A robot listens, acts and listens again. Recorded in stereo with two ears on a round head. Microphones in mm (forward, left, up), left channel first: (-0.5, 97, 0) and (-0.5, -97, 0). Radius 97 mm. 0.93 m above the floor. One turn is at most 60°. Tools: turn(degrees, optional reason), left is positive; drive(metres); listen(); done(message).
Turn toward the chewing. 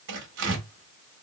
listen()
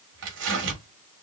listen()
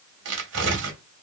done("I can't make out chewing to turn to.")